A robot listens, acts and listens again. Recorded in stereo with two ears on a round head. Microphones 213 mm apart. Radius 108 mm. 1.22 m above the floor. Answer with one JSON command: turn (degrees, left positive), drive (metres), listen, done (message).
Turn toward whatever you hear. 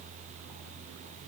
{"listen": true}
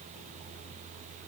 {"listen": true}
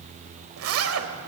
{"turn": -60}
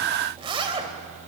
{"turn": -25}
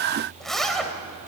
{"done": "Facing the zipper."}